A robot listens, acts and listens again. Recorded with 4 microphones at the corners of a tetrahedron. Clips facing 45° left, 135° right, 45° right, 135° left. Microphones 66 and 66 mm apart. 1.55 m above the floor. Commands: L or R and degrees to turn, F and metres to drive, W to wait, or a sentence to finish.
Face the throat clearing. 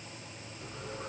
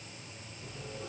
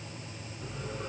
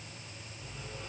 W
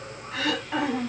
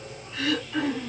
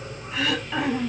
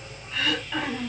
L40
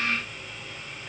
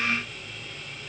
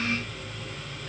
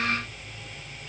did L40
W
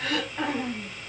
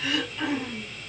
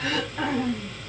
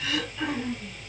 Found it: throat clearing, straight ahead, over 4 m away.